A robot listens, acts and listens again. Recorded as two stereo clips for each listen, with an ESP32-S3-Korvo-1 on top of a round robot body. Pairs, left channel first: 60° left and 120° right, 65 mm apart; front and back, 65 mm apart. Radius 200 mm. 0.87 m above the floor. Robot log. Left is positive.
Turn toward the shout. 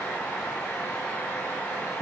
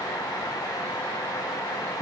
cmd idle
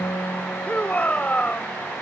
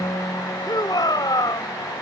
note: The shout: 10° right.
cmd yaw -10
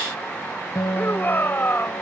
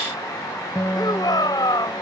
end: Found it: a shout, straight ahead.